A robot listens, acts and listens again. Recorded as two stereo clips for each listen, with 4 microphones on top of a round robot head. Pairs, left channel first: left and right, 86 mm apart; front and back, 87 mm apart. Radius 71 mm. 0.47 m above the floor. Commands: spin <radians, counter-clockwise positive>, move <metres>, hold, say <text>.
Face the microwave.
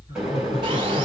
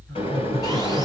say Facing the microwave, 2 to 4 m away.